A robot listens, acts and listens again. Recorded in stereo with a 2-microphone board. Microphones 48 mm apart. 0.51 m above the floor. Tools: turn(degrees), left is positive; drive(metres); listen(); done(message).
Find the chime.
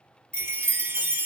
turn(degrees=-75)
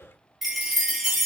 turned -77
done("Found it: a chime, straight ahead, under 1 m away.")